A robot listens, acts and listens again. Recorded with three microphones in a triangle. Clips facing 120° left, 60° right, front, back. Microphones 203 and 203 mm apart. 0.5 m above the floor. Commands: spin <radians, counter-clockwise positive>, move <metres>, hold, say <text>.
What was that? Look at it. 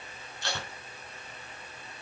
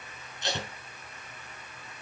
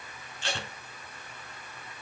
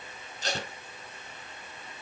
spin -2.27
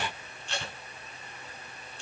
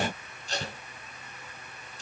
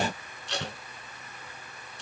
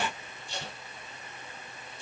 spin -0.17
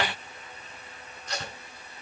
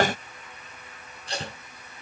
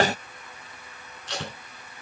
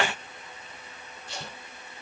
say Facing the tape being pulled.